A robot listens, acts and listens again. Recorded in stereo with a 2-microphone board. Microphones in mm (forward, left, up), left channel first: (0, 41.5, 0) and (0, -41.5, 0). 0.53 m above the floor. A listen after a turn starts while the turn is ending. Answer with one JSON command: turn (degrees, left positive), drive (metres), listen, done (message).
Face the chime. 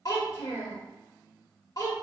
{"listen": true}
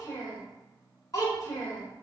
{"listen": true}
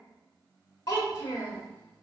{"done": "I can't make out a chime, only a child speaking."}